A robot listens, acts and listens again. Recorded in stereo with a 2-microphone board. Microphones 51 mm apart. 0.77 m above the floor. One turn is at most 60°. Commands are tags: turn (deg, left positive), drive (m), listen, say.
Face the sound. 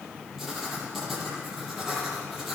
<turn deg="30"/>
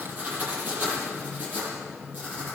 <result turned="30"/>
<turn deg="-35"/>
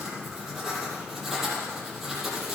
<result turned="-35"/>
<say>Facing the writing, over 4 m away.</say>